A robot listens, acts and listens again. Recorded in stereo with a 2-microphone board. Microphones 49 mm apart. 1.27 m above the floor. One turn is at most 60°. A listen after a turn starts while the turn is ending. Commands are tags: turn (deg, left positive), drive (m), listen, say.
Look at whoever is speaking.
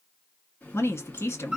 <turn deg="60"/>
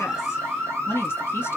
<turn deg="55"/>
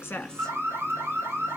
<listen/>
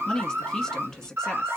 <say>Facing the woman speaking.</say>